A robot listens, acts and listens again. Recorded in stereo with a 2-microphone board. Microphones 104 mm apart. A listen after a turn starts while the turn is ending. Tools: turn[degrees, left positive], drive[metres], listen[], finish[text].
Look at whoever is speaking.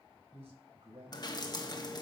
Action: turn[-90]
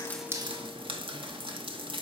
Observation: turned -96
Action: listen[]
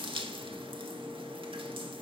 Action: listen[]
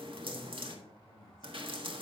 Action: finish[Facing the man speaking, over 4 m away.]